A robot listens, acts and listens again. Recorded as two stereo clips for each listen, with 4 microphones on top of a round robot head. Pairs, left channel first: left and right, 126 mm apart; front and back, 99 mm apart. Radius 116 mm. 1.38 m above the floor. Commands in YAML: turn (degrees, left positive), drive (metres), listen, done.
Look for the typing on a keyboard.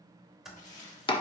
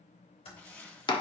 done: "Found it: typing on a keyboard, straight ahead, 2 to 4 m away."